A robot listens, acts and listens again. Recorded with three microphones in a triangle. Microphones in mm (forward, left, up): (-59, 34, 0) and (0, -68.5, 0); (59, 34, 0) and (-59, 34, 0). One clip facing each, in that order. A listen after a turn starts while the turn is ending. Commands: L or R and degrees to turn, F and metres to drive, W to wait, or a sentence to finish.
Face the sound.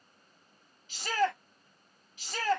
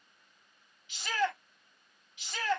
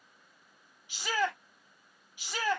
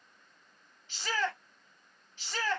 L80
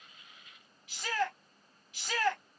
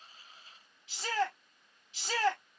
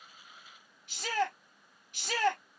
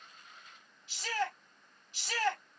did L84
Facing the shout.